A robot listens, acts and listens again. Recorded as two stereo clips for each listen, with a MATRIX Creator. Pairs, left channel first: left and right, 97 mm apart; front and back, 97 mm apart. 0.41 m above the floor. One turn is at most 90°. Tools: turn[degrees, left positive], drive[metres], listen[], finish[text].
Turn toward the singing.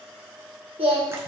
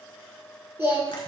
Thought: The singing: 115° right.
Action: turn[-90]
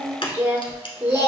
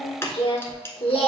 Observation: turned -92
Thought: The singing is now 25° right.
Action: turn[-25]
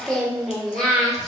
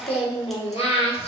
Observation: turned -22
Action: finish[Facing the singing.]